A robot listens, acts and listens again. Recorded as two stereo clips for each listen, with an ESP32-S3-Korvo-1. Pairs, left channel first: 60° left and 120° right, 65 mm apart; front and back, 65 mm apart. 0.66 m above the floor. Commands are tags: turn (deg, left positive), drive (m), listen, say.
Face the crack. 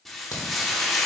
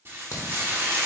<turn deg="35"/>
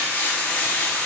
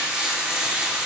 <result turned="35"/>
<say>Facing where the crack came from. I can't hear it now.</say>